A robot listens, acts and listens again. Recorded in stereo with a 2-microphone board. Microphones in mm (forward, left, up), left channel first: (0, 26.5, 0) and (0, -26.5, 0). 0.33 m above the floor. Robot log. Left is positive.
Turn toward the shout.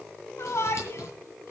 note: The shout: about 65° left or 115° left.
cmd yaw +65
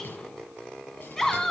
note: So it is at 10° left.
cmd yaw +10
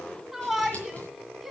end: Facing the shout.